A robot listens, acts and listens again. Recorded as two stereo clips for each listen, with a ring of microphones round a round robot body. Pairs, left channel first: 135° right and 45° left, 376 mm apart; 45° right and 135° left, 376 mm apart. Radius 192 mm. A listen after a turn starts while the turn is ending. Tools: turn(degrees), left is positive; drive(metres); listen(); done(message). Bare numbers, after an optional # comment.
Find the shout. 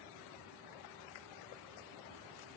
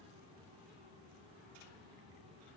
listen()
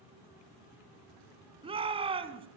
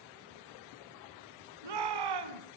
# The shout: 120° left.
turn(120)
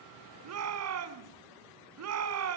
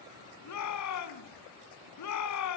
done("Facing the shout.")